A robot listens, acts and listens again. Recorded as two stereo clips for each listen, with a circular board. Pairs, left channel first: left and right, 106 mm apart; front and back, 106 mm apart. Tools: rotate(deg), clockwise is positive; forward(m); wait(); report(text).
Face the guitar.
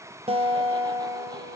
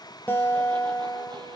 rotate(70)
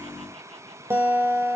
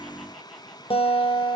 rotate(20)
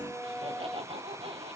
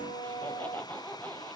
report("Found it: a guitar, straight ahead, 1 to 2 m away.")